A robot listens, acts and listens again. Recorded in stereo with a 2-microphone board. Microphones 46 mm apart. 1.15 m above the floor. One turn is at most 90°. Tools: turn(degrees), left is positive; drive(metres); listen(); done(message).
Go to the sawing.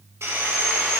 turn(degrees=-90)
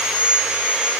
turn(degrees=-10)
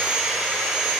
drive(metres=1.0)
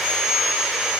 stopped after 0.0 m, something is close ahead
done("Blocked. The sawing is further on, straight ahead.")